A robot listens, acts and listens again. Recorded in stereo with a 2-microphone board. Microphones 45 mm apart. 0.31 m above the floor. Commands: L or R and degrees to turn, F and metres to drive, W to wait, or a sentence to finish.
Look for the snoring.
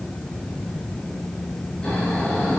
L20
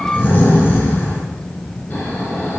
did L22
L140
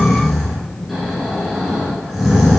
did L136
Found it: snoring, straight ahead, 2 to 4 m away.